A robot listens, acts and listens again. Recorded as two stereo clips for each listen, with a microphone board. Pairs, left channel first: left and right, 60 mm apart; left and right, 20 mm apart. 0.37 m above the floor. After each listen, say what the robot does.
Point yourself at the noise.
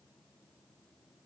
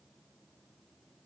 Keep listening.
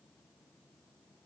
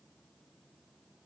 Keep listening.
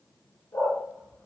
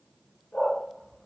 Turn 40° left.
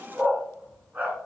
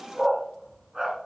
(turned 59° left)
Turn 25° right.
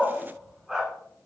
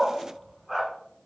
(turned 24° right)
Turn 10° right.
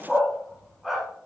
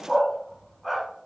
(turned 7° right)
Facing the dog barking.